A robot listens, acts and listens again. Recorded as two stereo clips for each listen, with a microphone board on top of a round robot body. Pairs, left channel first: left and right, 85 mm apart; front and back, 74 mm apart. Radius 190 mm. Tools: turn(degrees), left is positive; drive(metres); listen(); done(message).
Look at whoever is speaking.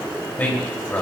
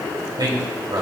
turn(degrees=160)
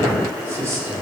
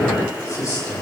turn(degrees=-35)
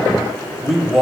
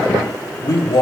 done("Facing the man speaking, 2 to 4 m away.")